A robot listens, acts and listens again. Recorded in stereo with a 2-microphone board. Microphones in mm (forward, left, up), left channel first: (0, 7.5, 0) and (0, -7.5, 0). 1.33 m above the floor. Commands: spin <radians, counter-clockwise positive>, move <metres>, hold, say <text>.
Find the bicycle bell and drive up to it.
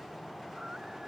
hold
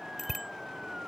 spin -0.52
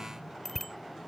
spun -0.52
spin 0.26
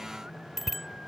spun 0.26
move 1.0
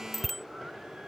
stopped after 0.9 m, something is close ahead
say Blocked. The bicycle bell is further on, straight ahead.